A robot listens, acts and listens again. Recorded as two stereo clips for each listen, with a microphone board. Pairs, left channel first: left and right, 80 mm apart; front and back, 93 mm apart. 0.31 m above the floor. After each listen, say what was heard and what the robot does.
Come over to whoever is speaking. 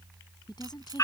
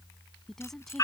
The woman speaking: 85° left. Turn 85° left.
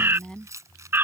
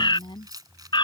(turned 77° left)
The woman speaking is now 10° left. Turn 10° left.
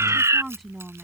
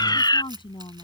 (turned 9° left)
Drive 1.0 m forward.
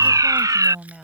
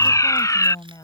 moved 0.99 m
The woman speaking is now 10° right. Turn 10° right.
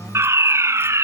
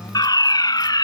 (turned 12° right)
Keep listening.
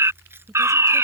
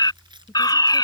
Drive 1.0 m forward.
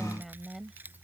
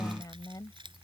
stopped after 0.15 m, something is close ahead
Arrived at the woman speaking, straight ahead.